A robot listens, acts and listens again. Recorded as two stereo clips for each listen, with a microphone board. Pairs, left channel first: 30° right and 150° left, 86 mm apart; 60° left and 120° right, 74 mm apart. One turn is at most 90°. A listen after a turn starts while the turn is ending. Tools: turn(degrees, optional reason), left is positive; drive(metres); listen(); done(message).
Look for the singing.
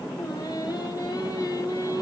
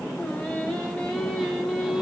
turn(degrees=-30, reason="The singing: 30° right.")
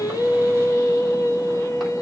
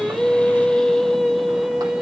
turn(degrees=-45, reason="The singing is now 45° right.")
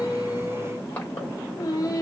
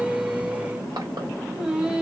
turn(degrees=-55, reason="The singing is now 55° right.")
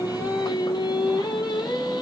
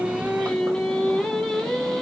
turn(degrees=-25, reason="The singing is now 25° right.")
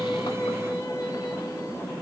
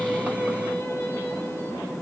done("Facing the singing.")